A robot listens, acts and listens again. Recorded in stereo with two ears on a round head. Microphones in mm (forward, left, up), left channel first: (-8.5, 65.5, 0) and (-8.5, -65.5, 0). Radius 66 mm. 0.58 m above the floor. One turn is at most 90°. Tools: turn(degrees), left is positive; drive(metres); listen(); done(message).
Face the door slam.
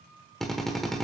listen()
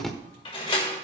turn(degrees=35)
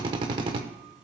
listen()
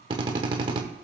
done("I heard a door slam, but can't make it out now. It was about straight ahead or 110° left.")